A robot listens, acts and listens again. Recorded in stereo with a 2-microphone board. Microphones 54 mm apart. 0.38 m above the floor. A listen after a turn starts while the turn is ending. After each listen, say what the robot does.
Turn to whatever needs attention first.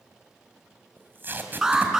Turn 30° right.
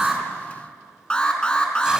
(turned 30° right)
Turn 15° left.
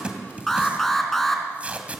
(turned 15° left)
Facing the alarm, 2 to 4 m away.